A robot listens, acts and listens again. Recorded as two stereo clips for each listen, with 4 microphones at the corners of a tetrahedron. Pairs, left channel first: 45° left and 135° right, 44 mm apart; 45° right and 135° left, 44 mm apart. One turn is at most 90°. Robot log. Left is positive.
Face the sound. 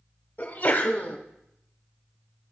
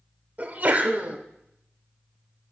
note: The sneeze: 80° left.
cmd yaw +80
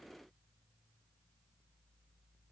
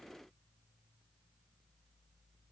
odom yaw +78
end: Facing where the sneeze came from. I can't hear it now.